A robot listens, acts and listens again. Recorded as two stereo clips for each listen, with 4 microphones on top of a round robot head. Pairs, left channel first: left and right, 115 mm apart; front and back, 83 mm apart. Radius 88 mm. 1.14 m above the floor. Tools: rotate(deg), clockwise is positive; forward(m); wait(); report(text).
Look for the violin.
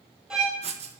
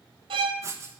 rotate(175)
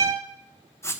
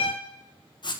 rotate(35)
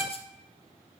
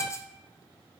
wait()
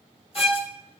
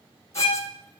report("Found it: a violin, straight ahead.")